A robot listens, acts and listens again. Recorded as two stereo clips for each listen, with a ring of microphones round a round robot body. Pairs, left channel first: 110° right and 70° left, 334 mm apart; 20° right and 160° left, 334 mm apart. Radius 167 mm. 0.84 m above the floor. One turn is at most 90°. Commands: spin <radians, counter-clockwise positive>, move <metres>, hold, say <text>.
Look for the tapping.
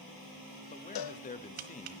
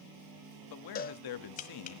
spin 0.79
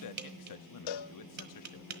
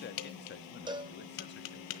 spin 0.17
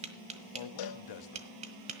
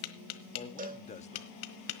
say Facing the tapping, 1 to 2 m away.